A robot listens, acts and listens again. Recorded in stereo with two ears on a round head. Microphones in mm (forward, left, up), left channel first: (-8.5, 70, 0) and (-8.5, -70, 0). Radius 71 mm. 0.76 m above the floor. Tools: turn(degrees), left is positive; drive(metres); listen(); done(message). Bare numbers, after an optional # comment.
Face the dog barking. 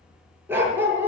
turn(-30)
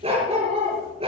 # So it is at 140° right.
turn(-140)
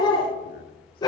# The dog barking is now 25° left.
turn(25)
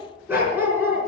# The dog barking is now 15° right.
turn(-15)
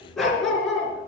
done("Found it: a dog barking, straight ahead.")